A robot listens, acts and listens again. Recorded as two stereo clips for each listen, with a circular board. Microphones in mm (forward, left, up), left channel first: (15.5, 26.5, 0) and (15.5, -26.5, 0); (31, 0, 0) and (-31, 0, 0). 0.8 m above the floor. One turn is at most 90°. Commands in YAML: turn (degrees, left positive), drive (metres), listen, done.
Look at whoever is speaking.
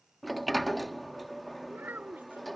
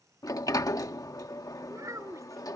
turn: -90
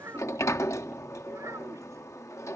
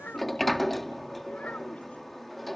turn: -60
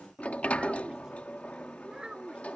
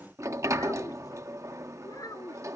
turn: -15
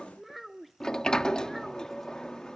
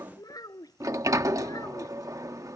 done: "Facing the child speaking."